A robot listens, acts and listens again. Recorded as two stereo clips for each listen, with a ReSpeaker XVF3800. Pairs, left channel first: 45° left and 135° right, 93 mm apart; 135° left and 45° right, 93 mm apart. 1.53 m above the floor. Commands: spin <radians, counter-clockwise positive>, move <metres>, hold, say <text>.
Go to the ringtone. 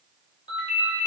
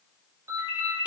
spin 0.26
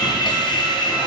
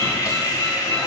hold
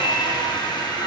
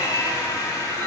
hold
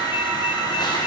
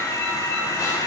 say Facing where the ringtone came from. I can't hear it now. I did not reach it.